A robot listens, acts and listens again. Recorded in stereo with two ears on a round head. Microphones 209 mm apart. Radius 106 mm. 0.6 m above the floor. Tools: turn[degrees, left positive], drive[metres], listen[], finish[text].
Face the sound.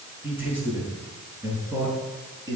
Thought: The man speaking: about 15° right or 165° right.
Action: turn[-15]
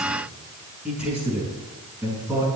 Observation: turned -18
Action: turn[-30]
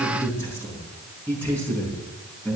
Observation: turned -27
Action: finish[Found it: a man speaking, straight ahead, over 4 m away.]